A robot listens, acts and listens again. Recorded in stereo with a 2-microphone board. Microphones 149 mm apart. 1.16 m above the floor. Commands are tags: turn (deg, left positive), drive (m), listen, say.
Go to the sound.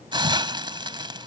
<turn deg="-30"/>
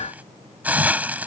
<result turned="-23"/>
<turn deg="-10"/>
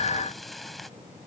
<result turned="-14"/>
<listen/>
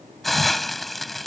<drive m="1.0"/>
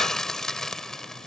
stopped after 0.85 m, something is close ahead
<say>Arrived at the hiss, straight ahead.</say>